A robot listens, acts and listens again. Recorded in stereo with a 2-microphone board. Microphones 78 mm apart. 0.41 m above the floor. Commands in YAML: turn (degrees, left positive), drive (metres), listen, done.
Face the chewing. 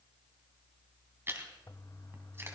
turn: -30
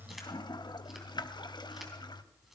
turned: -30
listen: true
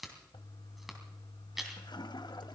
done: "Facing the chewing, 2 to 4 m away."